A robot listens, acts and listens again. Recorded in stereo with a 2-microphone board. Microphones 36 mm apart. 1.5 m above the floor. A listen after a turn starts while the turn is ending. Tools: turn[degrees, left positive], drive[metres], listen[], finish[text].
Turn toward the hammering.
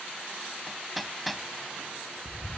Action: turn[-30]
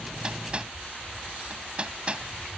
Thought: So it is at 145° right.
Action: turn[-145]
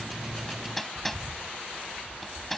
Thought: The hammering is now 10° left.
Action: turn[10]
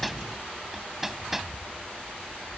Action: finish[Facing the hammering.]